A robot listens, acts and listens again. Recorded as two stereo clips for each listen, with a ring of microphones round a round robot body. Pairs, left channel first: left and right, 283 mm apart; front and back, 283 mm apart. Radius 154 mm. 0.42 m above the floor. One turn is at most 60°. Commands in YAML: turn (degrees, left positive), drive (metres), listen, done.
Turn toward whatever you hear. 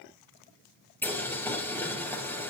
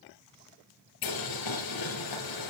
done: "Facing the boiling, 2 to 4 m away."